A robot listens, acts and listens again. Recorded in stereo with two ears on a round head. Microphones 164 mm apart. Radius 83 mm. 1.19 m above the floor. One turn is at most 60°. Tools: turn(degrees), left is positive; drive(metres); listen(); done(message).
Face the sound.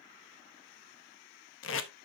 turn(degrees=60)
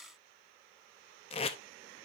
turn(degrees=30)
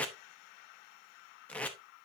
done("Found it: tape being pulled, straight ahead, under 1 m away.")